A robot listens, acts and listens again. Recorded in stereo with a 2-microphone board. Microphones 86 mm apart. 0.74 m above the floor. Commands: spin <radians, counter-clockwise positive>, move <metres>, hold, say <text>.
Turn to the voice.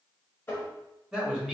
spin -0.52
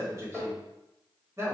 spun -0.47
spin -2.53
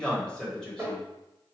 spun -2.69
spin 0.17
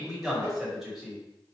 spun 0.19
say Facing the man speaking.